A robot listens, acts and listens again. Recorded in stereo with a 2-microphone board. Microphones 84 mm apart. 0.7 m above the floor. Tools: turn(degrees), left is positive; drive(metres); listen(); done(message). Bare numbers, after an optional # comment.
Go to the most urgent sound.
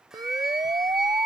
# The siren: about 50° right or 130° right.
turn(-50)
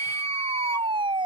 # So it is at 80° right.
turn(-80)
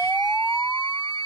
drive(1.0)
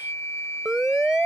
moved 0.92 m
drive(1.0)
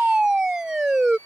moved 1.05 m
# The siren is now 10° right.
turn(-10)
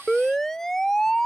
drive(1.0)
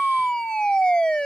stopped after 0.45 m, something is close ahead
# The siren is now 15° left.
turn(15)
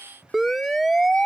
done("Arrived at the siren, straight ahead.")